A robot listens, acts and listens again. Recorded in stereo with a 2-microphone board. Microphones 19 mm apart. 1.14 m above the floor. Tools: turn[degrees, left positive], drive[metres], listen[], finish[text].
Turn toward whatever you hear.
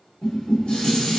Thought: The dishes clattering: about 75° left or 105° left.
Action: turn[75]
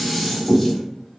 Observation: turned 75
Action: finish[Found it: dishes clattering, straight ahead, 1 to 2 m away.]